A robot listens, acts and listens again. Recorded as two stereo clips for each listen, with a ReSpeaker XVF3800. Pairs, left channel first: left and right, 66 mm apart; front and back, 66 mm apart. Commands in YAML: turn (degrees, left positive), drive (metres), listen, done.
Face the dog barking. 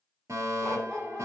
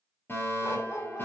turn: 10
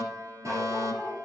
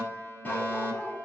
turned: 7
listen: true
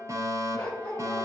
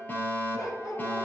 turn: 20
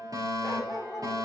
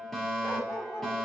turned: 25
done: "Found it: a dog barking, straight ahead, 2 to 4 m away."